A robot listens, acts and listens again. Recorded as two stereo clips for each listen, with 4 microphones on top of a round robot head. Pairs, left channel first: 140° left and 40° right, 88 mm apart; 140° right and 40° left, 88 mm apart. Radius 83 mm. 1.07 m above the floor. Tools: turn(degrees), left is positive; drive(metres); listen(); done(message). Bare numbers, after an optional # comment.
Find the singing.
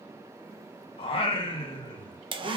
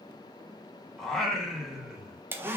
# The singing: 120° left.
turn(120)
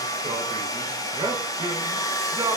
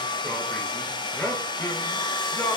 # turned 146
# The singing is now 85° right.
turn(-85)
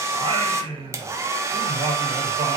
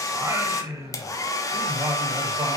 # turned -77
# The singing is now 20° right.
turn(-20)
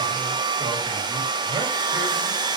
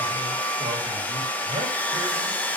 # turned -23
done("Found it: singing, straight ahead.")